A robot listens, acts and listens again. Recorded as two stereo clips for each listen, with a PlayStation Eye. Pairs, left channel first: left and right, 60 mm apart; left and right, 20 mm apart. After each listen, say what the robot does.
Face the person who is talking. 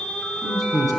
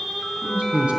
Turn 75° right.
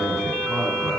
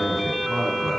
Found it: a man speaking, straight ahead, 2 to 4 m away.